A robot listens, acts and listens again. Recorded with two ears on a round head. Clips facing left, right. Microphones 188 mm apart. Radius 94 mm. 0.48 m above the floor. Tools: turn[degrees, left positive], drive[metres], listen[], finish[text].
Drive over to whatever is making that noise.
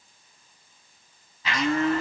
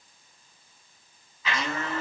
Thought: The blender: about 35° left or 145° left.
Action: turn[35]
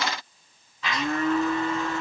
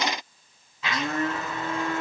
Action: drive[1.0]
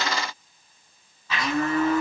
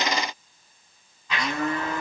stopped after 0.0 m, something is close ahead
Action: finish[Blocked. The blender is further on, straight ahead.]